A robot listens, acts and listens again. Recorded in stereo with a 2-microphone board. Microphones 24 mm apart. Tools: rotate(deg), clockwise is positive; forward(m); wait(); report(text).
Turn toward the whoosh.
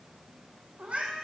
wait()
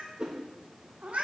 rotate(30)
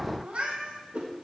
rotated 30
rotate(110)
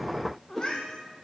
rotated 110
report("Facing the whoosh.")